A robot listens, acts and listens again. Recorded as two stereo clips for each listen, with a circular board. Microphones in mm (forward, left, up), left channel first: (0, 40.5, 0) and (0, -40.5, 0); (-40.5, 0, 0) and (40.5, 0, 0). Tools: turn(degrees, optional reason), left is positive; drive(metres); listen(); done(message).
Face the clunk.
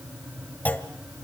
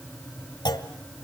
turn(degrees=160, reason="The clunk: 160° left.")
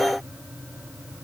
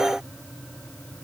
done("I heard a clunk from this way, but can't make it out now.")